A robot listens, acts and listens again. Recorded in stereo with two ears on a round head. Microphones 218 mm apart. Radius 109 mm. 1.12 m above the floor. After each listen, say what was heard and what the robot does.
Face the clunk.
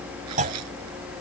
The clunk: about 30° right or 150° right. Turn 30° right.
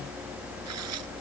Keep listening.
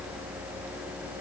I heard a clunk, but can't make it out now. It was about straight ahead or 120° right.